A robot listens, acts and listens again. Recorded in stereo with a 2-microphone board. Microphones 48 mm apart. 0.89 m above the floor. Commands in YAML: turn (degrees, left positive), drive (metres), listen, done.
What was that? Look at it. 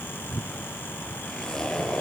turn: 30
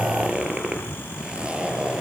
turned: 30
turn: -20
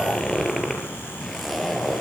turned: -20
done: "Found it: a zipper, straight ahead, over 4 m away."